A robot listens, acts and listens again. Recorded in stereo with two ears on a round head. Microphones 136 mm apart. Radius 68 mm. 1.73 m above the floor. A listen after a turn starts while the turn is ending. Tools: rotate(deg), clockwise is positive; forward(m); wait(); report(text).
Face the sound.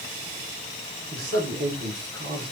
rotate(90)
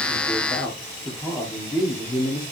rotate(-30)
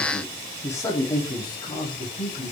rotate(-35)
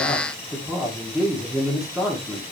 report("Found it: a man speaking, straight ahead, 1 to 2 m away.")